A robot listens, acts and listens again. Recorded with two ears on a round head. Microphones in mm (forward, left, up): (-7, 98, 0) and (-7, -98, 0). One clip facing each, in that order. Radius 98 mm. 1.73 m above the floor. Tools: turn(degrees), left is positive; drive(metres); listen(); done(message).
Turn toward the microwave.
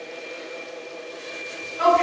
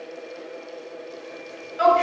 listen()
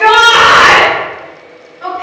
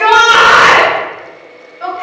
listen()
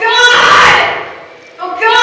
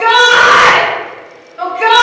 done("I can't make out a microwave to turn to.")